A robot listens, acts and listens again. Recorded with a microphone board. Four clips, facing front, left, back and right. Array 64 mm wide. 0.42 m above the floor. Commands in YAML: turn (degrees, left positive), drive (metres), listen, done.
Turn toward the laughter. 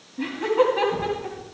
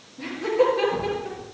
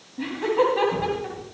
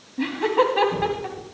turn: -95
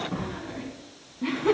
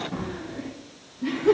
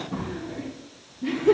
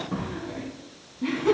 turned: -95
turn: -25
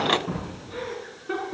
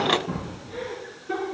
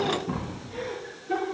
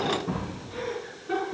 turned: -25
done: "Facing the laughter, over 4 m away."